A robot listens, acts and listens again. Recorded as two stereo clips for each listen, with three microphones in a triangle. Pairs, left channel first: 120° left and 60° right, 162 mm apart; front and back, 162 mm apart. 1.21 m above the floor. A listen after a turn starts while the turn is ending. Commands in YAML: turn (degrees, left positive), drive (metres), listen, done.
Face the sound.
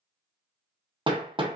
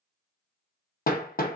done: "Found it: hammering, straight ahead, under 1 m away."